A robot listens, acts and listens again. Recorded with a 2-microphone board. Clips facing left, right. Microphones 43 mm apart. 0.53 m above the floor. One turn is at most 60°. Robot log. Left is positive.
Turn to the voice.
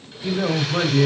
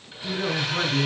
note: The man speaking: about 50° left or 130° left.
cmd yaw +50
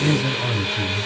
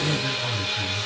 note: So it is at 75° left.
cmd yaw +60
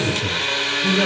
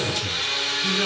note: Nothing new. It was at 15° left.
cmd yaw +15
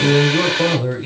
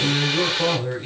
note: The man speaking is now 20° left.
cmd yaw +20
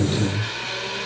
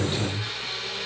end: Facing the man speaking.